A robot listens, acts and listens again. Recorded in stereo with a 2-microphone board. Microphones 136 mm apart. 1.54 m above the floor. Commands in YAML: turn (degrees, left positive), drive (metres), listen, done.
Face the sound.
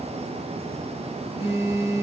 turn: -25
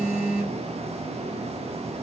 done: "Found it: a phone buzzing, straight ahead."